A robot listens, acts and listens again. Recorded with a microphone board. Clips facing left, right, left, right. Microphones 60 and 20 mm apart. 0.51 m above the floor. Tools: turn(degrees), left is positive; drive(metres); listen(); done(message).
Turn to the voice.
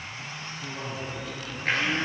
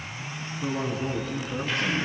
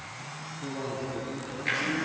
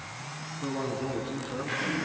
turn(degrees=-55)
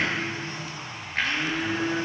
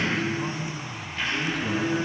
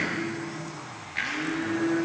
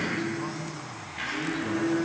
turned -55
listen()
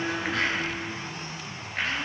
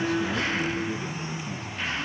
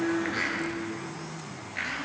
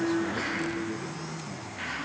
listen()
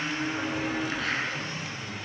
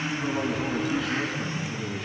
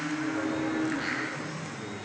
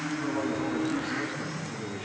done("I heard a man speaking, but can't make it out now. It was about straight ahead or 70° right.")